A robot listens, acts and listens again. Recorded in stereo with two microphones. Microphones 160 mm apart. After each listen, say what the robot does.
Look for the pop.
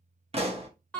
Turn 40° right.
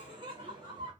Keep listening.
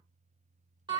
I heard a pop, but can't make it out now. It was about straight ahead or 100° right.